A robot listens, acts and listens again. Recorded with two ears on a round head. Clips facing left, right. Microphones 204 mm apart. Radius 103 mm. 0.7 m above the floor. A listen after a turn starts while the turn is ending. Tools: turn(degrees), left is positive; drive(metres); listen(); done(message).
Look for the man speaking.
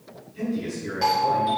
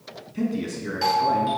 turn(degrees=-70)
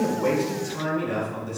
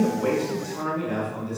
turn(degrees=10)
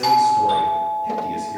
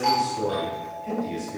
listen()
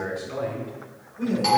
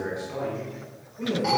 turn(degrees=10)
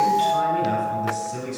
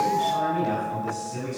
done("Found it: a man speaking, straight ahead.")